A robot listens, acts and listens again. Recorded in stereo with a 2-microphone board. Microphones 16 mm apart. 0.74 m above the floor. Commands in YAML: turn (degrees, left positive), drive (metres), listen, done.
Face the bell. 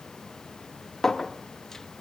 listen: true
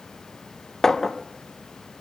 listen: true
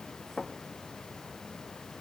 done: "I can't make out a bell, only a clink."